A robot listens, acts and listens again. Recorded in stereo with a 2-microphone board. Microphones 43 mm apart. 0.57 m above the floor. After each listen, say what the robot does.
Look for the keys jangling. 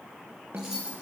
Turn 30° right.
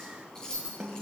Turn 15° left.
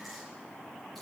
Keep listening.
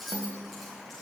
Facing the keys jangling, over 4 m away.